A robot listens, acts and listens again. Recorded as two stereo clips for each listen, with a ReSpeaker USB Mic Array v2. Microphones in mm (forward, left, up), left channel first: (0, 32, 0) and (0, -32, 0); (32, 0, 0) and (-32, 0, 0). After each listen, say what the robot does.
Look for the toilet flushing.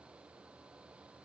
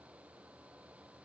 Keep listening.
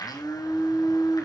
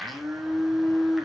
Keep listening.
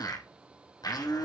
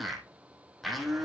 I can't make out a toilet flushing, only a blender.